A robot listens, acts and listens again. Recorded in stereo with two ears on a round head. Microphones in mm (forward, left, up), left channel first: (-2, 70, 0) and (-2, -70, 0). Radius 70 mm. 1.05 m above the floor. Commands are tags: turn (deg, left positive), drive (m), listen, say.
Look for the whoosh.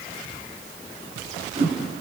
<turn deg="-35"/>
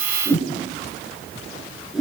<say>Facing the whoosh, over 4 m away.</say>